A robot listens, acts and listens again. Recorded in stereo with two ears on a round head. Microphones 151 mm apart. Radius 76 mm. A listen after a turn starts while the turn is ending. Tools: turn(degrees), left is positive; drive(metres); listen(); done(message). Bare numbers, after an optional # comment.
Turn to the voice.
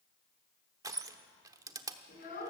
# The child speaking: about 50° left or 130° left.
turn(50)
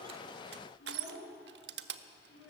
# So it is at 80° left.
turn(80)
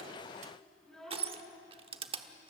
done("Facing the child speaking.")